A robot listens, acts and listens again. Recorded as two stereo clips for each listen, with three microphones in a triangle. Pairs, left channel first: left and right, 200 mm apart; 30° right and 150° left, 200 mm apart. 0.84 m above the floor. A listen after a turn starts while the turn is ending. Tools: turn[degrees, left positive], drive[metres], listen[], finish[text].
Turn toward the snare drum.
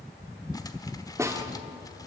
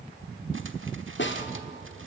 Thought: The snare drum: 15° right.
Action: turn[-15]
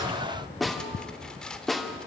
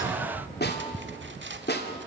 Action: finish[Facing the snare drum.]